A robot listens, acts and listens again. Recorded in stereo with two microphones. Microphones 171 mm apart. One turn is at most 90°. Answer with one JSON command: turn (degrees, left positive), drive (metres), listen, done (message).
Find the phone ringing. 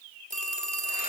{"turn": -50}
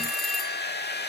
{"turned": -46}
{"done": "Facing the phone ringing, 2 to 4 m away."}